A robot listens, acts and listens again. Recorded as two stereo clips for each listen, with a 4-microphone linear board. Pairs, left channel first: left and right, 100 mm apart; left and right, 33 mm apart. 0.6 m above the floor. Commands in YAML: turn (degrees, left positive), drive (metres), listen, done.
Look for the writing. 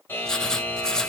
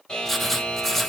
turn: 30
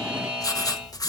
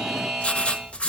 turn: 145
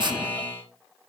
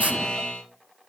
turn: -50
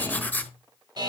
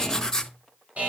turn: 15
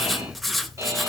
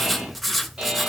done: "Found it: writing, straight ahead, 1 to 2 m away."